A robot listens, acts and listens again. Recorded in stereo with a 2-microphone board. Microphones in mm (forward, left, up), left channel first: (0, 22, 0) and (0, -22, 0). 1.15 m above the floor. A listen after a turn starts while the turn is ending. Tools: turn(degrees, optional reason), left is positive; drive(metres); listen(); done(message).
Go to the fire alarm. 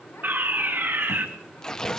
turn(degrees=-50, reason="The fire alarm: about 50° right or 130° right.")
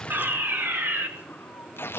turn(degrees=-75, reason="So it is at 75° right.")
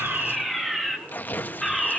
drive(metres=1.0)
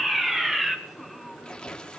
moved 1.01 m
turn(degrees=-10, reason="The fire alarm is now 10° right.")
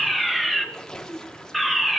drive(metres=1.0)
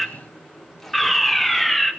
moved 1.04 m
drive(metres=1.0)
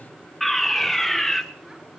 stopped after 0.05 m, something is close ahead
done("Arrived at the fire alarm, straight ahead.")